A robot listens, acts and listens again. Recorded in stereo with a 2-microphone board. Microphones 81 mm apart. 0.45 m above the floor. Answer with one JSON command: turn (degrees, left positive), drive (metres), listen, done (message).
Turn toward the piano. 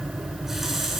{"listen": true}
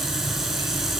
{"listen": true}
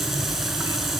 {"done": "I can't make out a piano to turn to."}